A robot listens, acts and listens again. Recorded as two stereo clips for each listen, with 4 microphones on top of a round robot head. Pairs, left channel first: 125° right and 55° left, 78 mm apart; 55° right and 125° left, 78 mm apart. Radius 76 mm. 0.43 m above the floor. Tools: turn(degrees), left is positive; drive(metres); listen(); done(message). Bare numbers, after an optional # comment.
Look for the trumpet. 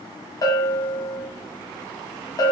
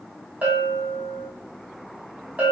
listen()
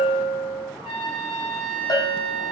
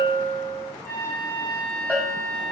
# The trumpet: 120° right.
turn(-120)
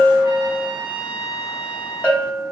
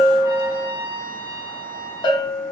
# The trumpet is now 15° right.
turn(-15)
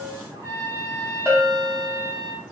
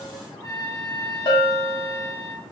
done("Found it: a trumpet, straight ahead.")